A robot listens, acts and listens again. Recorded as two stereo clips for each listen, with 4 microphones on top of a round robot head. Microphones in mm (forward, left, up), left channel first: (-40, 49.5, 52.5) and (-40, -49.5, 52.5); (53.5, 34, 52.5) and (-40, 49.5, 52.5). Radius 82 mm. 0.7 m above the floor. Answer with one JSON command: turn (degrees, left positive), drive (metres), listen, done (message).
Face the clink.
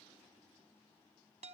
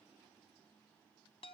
{"listen": true}
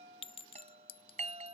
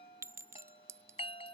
{"turn": 110}
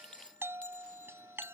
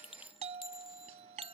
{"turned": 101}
{"turn": 10}
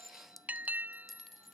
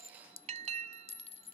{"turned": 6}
{"done": "Found it: a clink, straight ahead."}